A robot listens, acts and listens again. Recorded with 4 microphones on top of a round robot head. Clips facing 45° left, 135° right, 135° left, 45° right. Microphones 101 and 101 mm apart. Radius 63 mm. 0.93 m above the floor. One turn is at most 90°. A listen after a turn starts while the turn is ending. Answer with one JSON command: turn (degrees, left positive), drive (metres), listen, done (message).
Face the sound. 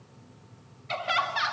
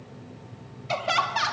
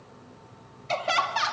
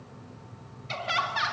{"turn": 90}
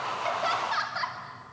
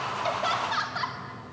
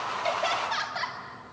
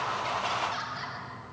{"turn": 90}
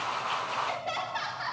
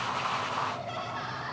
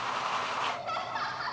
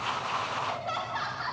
{"turn": 45}
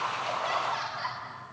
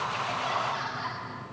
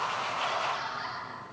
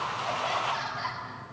{"done": "Found it: laughter, straight ahead."}